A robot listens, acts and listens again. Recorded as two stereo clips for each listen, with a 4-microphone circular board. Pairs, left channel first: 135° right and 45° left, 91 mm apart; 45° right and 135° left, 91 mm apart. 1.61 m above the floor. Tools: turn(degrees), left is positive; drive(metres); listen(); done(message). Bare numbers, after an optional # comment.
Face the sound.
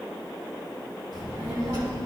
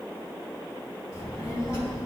# The child speaking: 10° left.
turn(10)
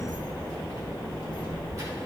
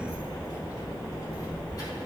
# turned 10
done("Found it: a child speaking, straight ahead.")